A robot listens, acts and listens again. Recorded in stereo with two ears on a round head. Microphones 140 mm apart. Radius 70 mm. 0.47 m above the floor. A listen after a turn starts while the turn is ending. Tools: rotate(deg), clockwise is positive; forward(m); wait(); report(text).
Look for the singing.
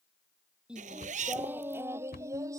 rotate(20)
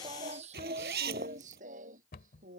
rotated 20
rotate(120)
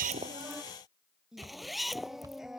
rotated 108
report("Facing the singing.")